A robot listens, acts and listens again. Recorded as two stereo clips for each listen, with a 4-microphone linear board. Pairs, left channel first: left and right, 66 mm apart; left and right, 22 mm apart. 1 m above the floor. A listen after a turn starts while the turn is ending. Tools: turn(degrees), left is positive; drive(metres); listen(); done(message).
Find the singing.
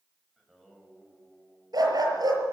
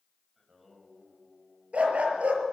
turn(degrees=30)
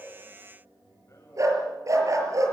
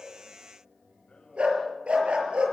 turn(degrees=135)
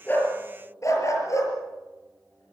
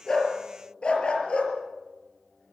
listen()
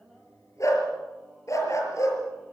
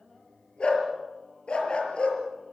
done("Facing the singing.")